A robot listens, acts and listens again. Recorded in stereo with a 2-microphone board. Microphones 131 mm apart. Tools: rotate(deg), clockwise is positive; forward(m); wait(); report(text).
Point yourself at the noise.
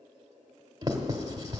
rotate(30)
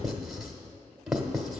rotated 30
report("Found it: writing, straight ahead, 1 to 2 m away.")